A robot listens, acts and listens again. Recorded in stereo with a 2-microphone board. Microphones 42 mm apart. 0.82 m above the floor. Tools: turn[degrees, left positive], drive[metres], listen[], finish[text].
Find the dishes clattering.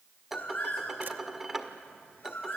Action: turn[-30]
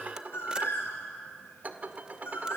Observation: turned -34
Thought: So it is at 140° right.
Action: turn[-140]
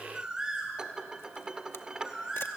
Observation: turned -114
Thought: The dishes clattering is now 25° right.
Action: turn[-25]
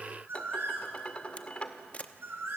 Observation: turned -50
Thought: The dishes clattering is now 25° left.
Action: turn[25]
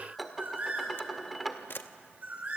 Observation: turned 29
Action: finish[Facing the dishes clattering, 1 to 2 m away.]